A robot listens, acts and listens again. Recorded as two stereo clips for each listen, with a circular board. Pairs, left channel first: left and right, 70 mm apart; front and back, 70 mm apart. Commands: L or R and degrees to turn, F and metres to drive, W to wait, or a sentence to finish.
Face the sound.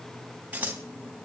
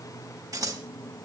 R155
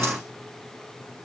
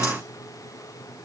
W
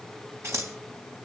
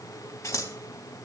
R45
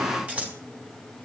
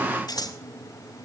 R20
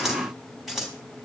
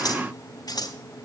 Found it: scissors, straight ahead.